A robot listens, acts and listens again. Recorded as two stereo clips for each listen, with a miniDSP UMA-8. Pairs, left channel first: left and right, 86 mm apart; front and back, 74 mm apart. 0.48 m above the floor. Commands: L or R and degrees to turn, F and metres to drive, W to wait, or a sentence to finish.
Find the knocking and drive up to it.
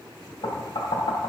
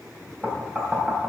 L110
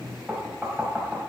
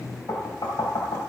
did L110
F1.0
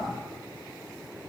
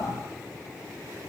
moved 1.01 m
W
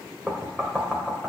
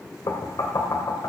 F1.0
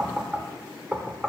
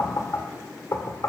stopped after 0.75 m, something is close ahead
I am next to the knocking.